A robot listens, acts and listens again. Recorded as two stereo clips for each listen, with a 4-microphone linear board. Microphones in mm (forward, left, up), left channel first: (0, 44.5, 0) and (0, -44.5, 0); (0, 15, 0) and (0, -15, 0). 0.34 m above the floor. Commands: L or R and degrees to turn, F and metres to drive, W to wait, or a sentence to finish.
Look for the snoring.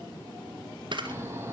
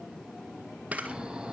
R30
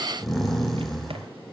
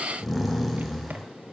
Facing the snoring.